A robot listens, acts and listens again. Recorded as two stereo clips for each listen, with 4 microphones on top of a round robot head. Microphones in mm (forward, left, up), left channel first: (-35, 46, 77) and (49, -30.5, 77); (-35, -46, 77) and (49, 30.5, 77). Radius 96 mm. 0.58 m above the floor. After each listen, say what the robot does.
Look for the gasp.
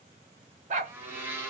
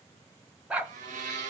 Keep listening.
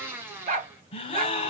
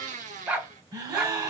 Turn 100° left.
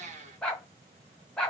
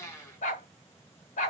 Facing where the gasp came from. I can't hear it now.